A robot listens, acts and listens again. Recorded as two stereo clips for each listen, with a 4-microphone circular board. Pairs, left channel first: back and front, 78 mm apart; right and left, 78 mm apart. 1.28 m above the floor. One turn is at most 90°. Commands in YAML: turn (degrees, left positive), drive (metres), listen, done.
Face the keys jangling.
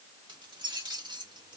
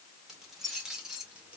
turn: 15
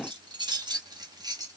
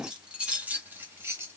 turn: 35
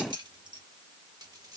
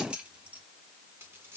turn: 15
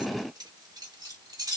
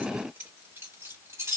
turn: 35
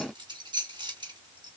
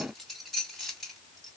done: "Facing the keys jangling."